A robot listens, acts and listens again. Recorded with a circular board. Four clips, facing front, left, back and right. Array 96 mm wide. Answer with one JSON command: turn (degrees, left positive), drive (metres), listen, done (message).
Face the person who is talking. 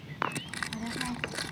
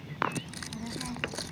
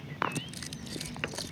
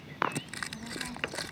{"turn": 10}
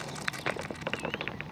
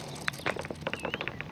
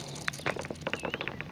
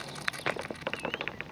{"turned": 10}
{"done": "Facing the child speaking."}